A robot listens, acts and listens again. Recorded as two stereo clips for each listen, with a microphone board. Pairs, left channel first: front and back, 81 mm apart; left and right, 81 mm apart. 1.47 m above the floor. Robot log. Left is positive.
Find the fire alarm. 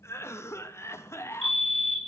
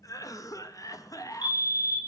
note: The fire alarm: 90° left.
cmd yaw +90
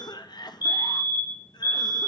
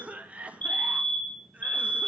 note: The fire alarm is now 20° left.
cmd yaw +20
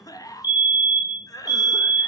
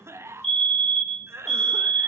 end: Facing the fire alarm.